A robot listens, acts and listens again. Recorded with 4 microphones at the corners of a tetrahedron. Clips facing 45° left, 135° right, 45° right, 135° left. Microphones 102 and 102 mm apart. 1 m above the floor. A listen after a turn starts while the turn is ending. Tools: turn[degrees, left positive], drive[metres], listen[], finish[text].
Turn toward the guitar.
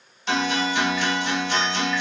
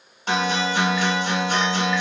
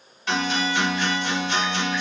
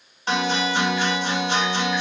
Thought: The guitar: 170° right.
Action: turn[-170]
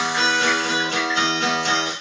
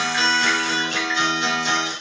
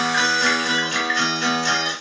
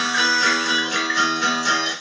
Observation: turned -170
Thought: The guitar is now 60° left.
Action: turn[60]
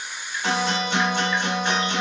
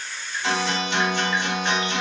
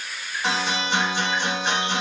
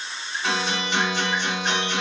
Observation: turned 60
Action: finish[Found it: a guitar, straight ahead, 1 to 2 m away.]